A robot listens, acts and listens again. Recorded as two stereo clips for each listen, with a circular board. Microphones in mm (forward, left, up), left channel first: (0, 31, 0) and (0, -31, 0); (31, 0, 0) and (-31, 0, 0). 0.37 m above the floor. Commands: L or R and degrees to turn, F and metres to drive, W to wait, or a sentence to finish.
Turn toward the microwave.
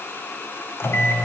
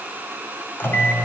L45
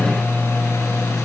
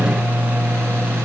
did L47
Facing the microwave, 1 to 2 m away.